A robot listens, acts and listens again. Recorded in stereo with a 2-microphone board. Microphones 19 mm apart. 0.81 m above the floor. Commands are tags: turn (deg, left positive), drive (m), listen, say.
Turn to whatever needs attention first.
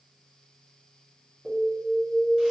<turn deg="20"/>
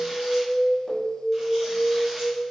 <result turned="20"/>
<say>Facing the alarm.</say>